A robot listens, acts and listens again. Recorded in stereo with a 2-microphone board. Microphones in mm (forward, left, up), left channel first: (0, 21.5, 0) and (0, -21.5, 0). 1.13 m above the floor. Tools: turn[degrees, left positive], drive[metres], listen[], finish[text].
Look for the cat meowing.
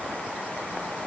Action: listen[]
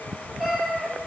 Action: turn[30]
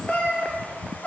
Thought: So it is at 150° left.
Action: turn[150]
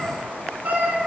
Thought: The cat meowing is now 40° right.
Action: turn[-40]
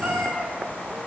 Thought: The cat meowing is now 30° right.
Action: turn[-30]
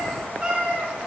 Thought: The cat meowing is now 20° right.
Action: turn[-20]
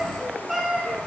Action: finish[Found it: a cat meowing, straight ahead.]